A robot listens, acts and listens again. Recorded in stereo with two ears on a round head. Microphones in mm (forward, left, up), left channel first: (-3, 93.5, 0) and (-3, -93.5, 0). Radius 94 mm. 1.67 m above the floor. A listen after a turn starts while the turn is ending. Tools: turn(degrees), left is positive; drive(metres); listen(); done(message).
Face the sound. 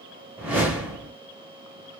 turn(degrees=-30)
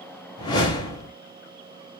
turn(degrees=20)
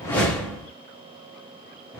done("Facing the whoosh.")